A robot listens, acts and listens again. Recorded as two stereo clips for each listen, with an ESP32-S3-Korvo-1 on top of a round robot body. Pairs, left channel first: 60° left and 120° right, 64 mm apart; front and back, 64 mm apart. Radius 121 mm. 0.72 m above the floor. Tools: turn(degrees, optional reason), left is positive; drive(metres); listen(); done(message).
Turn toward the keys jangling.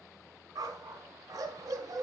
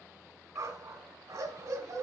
listen()
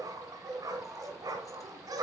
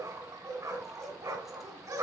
listen()
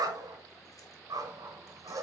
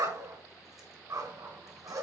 done("I can't make out keys jangling to turn to.")